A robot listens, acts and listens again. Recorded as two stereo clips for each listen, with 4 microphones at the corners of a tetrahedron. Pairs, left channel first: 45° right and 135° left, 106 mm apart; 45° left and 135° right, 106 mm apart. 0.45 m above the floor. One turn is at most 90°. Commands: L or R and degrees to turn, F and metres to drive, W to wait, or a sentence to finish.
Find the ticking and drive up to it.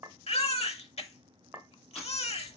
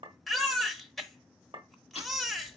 L45
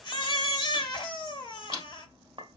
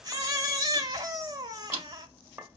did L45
F1.0
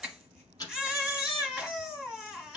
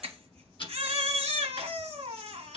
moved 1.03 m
L10
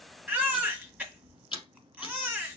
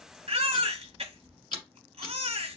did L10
F1.0
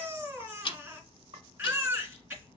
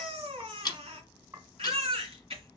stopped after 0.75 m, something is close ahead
Arrived at the ticking, straight ahead.